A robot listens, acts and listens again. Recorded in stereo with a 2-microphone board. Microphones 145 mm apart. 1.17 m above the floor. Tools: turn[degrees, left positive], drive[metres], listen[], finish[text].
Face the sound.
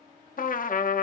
Thought: The trumpet: about 70° left or 110° left.
Action: turn[70]
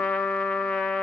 Thought: So it is at 10° left.
Action: turn[10]
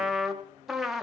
Action: finish[Found it: a trumpet, straight ahead, 1 to 2 m away.]